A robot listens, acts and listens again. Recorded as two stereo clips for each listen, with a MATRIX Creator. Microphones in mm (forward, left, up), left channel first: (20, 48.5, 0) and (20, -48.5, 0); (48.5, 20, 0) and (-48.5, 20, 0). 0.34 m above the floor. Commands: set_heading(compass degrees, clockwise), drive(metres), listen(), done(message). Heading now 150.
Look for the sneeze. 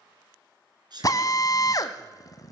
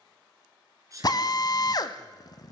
set_heading(280)
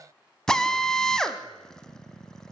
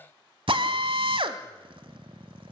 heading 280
done("I heard a sneeze from this way, but can't make it out now.")